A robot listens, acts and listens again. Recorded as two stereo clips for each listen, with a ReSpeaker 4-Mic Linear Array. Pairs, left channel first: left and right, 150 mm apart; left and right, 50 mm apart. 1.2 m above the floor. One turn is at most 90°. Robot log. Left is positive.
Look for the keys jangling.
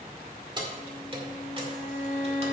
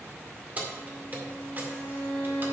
note: The keys jangling: about 40° right or 140° right.
cmd yaw -40
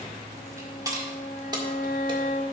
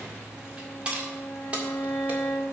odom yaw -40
note: The keys jangling: about 30° right or 150° right.
cmd yaw -30
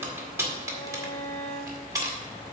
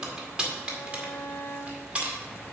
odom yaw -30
note: So it is at 25° right.
cmd yaw -25
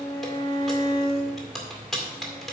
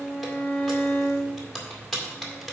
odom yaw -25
end: Facing the keys jangling, 2 to 4 m away.